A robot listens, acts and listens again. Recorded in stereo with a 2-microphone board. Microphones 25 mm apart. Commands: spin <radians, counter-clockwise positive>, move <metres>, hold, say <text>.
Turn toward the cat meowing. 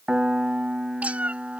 spin -1.13
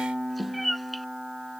say Facing the cat meowing.